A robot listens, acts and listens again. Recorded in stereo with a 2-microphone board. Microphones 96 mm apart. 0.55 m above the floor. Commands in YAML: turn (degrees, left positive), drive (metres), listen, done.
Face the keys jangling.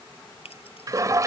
turn: 90
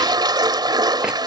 listen: true
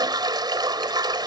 listen: true
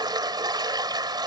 done: "Facing where the keys jangling came from. I can't hear it now."